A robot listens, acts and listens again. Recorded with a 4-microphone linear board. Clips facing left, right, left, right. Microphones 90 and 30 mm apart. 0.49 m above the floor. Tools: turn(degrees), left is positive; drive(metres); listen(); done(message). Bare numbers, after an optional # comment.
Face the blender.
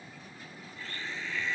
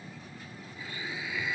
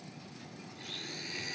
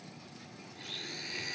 turn(-30)
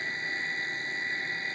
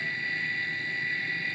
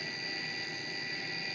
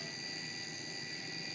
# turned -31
# So it is at 25° left.
turn(25)
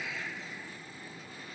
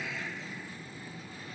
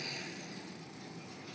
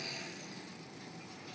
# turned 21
listen()
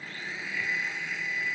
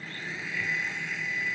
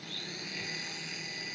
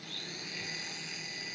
done("Found it: a blender, straight ahead.")